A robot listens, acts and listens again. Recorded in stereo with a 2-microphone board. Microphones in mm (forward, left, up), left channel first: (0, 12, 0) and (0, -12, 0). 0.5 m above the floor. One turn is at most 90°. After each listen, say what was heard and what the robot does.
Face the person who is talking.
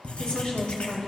The woman speaking: about 35° left or 145° left. Turn 35° left.
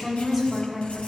Facing the woman speaking.